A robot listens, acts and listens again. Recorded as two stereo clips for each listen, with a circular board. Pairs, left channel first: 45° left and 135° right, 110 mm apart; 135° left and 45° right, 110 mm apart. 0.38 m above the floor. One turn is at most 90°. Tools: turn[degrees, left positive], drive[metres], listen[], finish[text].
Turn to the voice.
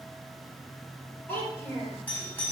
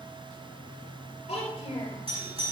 Thought: The child speaking: 120° left.
Action: turn[90]
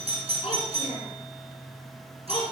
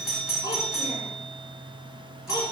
Thought: The child speaking is now 20° left.
Action: turn[20]
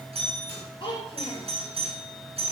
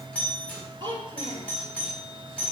Action: finish[Facing the child speaking.]